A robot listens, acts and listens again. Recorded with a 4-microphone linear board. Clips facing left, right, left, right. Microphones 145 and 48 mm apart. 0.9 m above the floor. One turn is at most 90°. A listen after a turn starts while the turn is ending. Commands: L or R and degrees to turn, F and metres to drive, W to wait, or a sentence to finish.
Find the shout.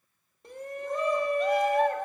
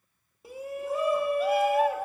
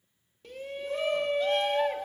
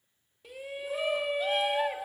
R30
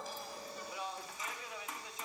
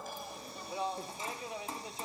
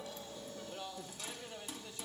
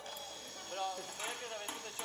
R90
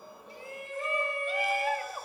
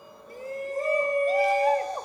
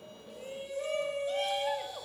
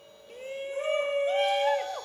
R45
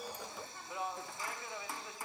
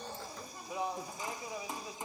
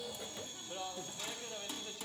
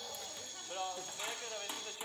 R25
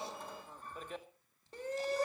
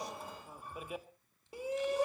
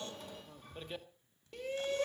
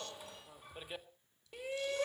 R10
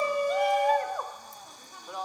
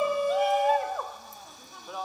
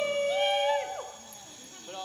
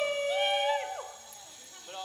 Facing the shout.